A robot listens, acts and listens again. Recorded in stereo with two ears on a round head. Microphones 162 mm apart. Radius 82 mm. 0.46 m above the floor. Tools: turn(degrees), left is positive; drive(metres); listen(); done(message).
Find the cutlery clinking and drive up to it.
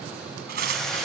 turn(degrees=-60)
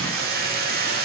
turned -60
listen()
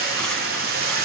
listen()
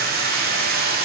done("I heard cutlery clinking, but can't make it out now. It was about straight ahead or 60° right. I did not reach it.")